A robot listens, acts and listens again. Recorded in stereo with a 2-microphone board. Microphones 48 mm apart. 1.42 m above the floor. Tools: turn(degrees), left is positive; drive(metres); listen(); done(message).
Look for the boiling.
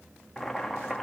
turn(degrees=30)
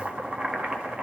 turn(degrees=-30)
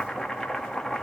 done("Facing the boiling, 1 to 2 m away.")